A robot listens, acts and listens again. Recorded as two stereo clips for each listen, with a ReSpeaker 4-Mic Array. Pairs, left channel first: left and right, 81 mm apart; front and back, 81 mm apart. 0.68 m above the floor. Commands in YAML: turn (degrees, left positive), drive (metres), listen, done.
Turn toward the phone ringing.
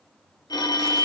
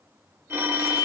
turn: 120
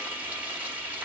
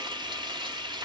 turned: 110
turn: 10
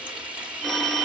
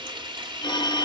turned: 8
done: "Found it: a phone ringing, straight ahead."